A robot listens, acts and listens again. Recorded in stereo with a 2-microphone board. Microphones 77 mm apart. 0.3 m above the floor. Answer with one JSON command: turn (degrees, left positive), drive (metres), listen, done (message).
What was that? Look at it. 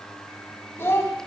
{"turn": 35}
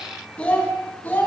{"turn": 25}
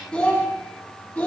{"turn": 20}
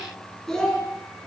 {"turn": 10}
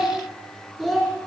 {"done": "Facing the child speaking, 2 to 4 m away."}